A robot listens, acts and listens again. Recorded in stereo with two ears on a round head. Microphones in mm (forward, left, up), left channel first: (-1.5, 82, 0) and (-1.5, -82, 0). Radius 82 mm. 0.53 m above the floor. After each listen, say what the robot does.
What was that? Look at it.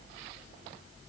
Keep listening.
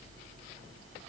Keep listening.
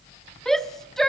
Turn 30° left.
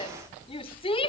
Turn 145° left.
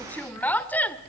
Turn 10° left.
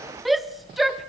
Facing the shout.